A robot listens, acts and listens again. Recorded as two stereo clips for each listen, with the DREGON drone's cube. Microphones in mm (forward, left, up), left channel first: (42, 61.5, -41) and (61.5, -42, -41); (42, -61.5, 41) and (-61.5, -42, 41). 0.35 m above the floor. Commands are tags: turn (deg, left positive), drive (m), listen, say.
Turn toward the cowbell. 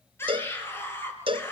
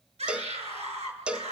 <turn deg="-110"/>
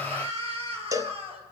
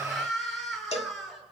<turn deg="-20"/>
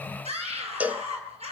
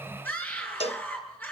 <say>Found it: a cowbell, straight ahead.</say>